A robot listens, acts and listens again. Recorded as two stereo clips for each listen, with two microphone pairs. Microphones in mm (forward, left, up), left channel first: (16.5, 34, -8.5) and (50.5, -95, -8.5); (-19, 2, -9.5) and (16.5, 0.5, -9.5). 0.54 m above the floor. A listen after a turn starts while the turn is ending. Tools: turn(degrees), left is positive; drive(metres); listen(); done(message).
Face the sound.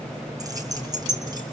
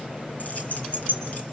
turn(degrees=-130)
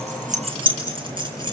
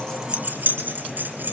turn(degrees=-20)
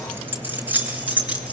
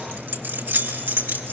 done("Found it: keys jangling, straight ahead.")